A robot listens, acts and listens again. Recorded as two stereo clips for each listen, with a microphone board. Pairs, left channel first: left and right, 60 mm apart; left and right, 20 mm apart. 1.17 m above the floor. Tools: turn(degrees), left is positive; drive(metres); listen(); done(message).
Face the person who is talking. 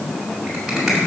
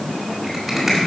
listen()
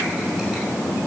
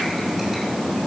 listen()
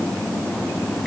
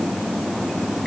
done("I can't make out anyone speaking to turn to.")